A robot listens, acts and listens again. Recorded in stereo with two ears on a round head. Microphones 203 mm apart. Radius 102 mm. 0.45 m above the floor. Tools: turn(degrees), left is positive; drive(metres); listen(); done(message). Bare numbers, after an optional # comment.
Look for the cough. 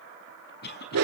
# The cough: about 45° left or 135° left.
turn(45)
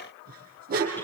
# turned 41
listen()
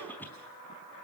# So it is at 10° left.
turn(10)
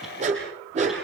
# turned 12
listen()
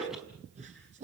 listen()
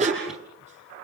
done("Facing where the cough came from. I can't hear it now.")